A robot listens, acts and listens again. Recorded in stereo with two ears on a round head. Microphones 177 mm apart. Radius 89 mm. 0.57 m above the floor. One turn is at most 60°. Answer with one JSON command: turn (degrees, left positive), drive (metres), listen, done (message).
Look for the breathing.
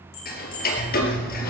{"turn": 55}
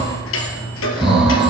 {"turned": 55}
{"done": "Found it: breathing, straight ahead, over 4 m away."}